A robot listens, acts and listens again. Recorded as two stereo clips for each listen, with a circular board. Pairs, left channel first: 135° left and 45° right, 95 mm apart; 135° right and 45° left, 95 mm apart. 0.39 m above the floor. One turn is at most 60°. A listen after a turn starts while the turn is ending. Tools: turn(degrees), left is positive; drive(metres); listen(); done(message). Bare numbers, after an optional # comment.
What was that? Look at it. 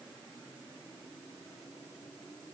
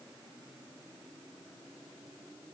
listen()
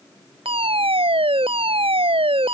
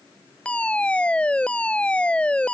# The fire alarm: 60° right.
turn(-60)
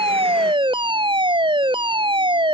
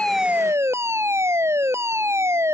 # The fire alarm is now 15° right.
turn(-15)
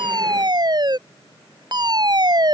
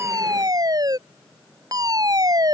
done("Facing the fire alarm.")